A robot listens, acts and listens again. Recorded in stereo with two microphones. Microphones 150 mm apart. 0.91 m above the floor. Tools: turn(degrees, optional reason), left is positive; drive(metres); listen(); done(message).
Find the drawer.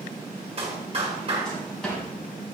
turn(degrees=30)
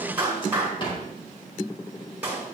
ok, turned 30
turn(degrees=145, reason="So it is at 145° left.")
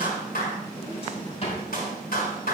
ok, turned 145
turn(degrees=40, reason="The drawer is now 40° left.")
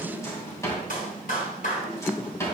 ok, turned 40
turn(degrees=20, reason="The drawer is now 20° left.")
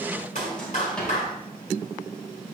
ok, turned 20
done("Found it: a drawer, straight ahead.")